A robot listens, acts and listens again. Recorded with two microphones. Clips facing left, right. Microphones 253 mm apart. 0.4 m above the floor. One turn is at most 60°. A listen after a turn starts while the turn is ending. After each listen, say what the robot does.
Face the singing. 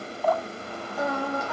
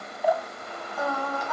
Turn 30° left.
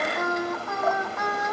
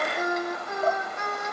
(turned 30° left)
Turn 30° right.
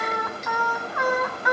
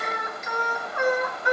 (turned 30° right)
Turn 35° right.
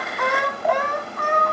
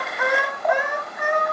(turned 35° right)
Turn 15° right.
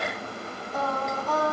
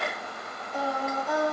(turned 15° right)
Turn 15° right.
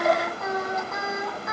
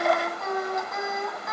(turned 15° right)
Facing the singing.